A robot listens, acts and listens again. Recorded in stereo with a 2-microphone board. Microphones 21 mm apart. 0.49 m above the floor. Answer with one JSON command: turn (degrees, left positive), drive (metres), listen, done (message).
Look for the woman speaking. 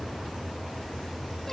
{"listen": true}
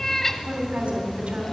{"turn": -90}
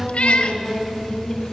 {"done": "Facing the woman speaking."}